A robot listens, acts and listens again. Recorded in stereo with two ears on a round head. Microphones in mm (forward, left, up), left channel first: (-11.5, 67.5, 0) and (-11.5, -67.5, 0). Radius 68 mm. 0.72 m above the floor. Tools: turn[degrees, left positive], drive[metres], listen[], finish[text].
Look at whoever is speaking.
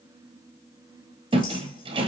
Action: listen[]
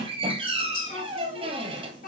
Thought: The child speaking: about 65° left or 115° left.
Action: turn[65]
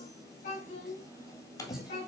Thought: So it is at 50° left.
Action: turn[50]
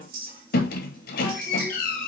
Action: listen[]
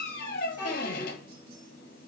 Thought: The child speaking is now 10° right.
Action: turn[-10]
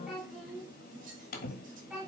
Action: finish[Found it: a child speaking, straight ahead.]